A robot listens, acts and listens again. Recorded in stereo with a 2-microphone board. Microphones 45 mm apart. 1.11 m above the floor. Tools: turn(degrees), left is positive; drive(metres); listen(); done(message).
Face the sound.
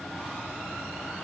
listen()
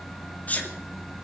turn(degrees=35)
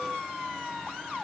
listen()
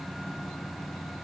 done("I heard a sneeze, but can't make it out now. It was about straight ahead or 110° left.")